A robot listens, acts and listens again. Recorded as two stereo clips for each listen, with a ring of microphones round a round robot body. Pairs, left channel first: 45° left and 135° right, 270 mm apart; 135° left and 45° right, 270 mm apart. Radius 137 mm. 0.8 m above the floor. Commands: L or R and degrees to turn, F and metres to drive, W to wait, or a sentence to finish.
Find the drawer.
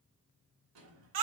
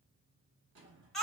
R95
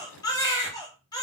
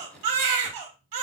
W
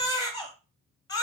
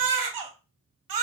W
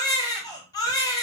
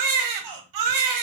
I heard a drawer from this way, but can't make it out now.